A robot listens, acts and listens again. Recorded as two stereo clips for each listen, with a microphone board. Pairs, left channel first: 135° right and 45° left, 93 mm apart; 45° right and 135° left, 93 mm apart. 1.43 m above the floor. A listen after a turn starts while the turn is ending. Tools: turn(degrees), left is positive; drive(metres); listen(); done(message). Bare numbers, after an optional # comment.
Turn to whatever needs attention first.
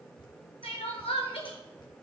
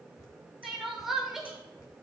# The crying: 140° right.
turn(-140)
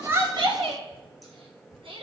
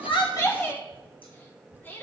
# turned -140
# The crying is now 25° left.
turn(25)
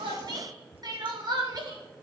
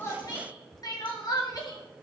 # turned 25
done("Found it: crying, straight ahead.")